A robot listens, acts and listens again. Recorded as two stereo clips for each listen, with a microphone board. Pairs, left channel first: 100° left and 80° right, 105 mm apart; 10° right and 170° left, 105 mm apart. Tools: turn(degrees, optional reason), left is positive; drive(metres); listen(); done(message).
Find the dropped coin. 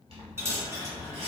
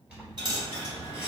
turn(degrees=-145, reason="The dropped coin: 145° right.")
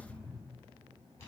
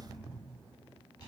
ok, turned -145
done("Facing where the dropped coin came from. I can't hear it now.")